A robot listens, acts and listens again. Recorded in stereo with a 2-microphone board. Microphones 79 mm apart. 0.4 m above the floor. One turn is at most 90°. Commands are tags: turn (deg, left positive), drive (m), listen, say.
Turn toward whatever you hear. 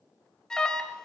<turn deg="30"/>
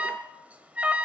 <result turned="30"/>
<turn deg="-20"/>
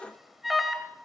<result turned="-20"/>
<say>Found it: an alarm, straight ahead.</say>